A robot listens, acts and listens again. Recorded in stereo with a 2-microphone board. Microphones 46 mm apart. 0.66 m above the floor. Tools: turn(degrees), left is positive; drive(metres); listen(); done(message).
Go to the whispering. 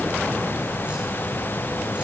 listen()
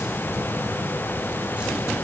listen()
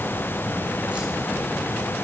done("I can't make out whispering.")